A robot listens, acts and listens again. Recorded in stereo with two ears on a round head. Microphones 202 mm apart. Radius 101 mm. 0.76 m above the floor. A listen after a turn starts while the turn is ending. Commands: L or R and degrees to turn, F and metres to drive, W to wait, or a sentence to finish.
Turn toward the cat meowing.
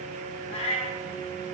L25
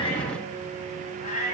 L35
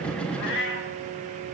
L120
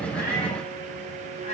L30
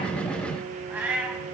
R10
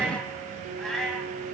Facing the cat meowing, 1 to 2 m away.